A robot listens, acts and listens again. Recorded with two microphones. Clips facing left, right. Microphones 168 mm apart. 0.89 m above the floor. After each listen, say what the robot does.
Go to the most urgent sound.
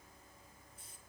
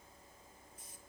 Keep listening.
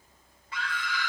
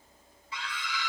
Turn 55° left.
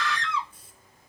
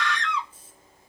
Drive 1.0 m forward.
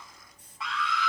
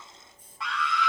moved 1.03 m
Drive 1.0 m forward.
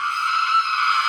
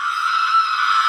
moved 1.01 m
Drive 1.0 m forward.
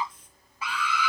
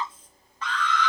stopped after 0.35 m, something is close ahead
Turn 10° left.
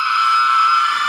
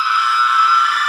Arrived at the scream, straight ahead.